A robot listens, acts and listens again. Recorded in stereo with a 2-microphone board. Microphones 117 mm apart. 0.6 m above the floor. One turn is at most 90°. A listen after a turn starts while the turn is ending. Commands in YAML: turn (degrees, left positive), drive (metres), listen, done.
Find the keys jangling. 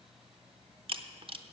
listen: true
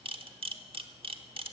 listen: true
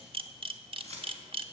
turn: -65
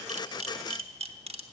listen: true
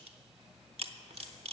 listen: true
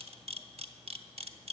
done: "I heard keys jangling, but can't make it out now. It was about straight ahead or 50° right."